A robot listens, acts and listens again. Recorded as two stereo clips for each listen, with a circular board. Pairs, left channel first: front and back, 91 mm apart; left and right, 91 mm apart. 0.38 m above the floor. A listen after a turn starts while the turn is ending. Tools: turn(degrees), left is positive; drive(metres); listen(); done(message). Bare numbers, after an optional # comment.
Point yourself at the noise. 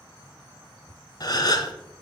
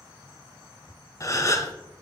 # The gasp: 40° left.
turn(40)
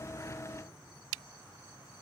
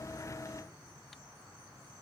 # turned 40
done("I heard a gasp from this way, but can't make it out now.")